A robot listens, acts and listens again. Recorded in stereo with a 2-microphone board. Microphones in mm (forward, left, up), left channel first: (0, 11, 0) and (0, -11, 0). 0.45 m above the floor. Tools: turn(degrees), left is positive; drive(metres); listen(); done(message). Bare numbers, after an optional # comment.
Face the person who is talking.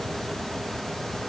listen()
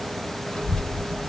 # The child speaking: about 50° left or 130° left.
turn(50)
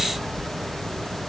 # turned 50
# So it is at 70° left.
turn(70)
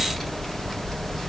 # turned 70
# The child speaking is now 15° left.
turn(15)
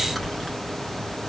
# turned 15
done("Facing the child speaking.")